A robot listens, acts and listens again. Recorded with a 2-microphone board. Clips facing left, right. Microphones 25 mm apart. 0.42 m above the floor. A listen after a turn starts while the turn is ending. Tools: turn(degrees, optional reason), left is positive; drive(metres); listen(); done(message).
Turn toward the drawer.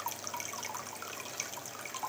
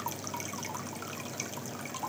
listen()
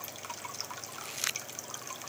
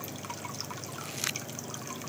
listen()
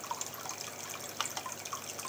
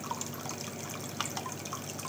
done("I can't make out a drawer to turn to.")